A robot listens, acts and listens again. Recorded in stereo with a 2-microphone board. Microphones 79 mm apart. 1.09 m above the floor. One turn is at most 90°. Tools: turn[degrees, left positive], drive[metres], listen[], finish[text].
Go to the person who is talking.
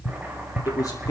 Thought: The man speaking: about 50° left or 130° left.
Action: turn[50]
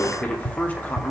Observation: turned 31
Thought: So it is at 20° left.
Action: turn[20]
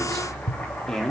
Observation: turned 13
Thought: The man speaking is now 10° left.
Action: turn[10]
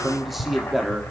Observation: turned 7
Action: drive[1.0]
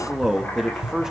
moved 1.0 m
Action: drive[1.0]
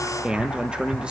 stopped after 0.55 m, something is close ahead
Thought: The man speaking is now 10° right.
Action: turn[-10]
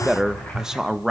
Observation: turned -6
Action: finish[Arrived at the man speaking, straight ahead.]